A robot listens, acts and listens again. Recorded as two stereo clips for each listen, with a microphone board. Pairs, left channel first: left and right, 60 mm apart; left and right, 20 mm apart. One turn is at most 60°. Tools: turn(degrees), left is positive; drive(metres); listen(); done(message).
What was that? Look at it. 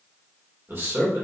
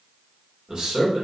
turn(degrees=-40)
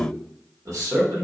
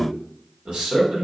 turn(degrees=-60)
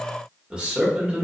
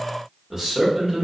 turn(degrees=-20)
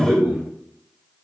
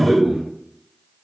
done("Found it: a man speaking, straight ahead.")